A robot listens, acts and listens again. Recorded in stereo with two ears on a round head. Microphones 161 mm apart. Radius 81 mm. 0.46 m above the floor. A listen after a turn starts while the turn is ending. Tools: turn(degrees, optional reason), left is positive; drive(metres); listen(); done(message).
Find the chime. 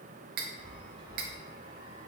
turn(degrees=-25, reason="The chime: about 25° right or 155° right.")
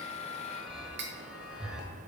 done("Found it: a chime, straight ahead, under 1 m away.")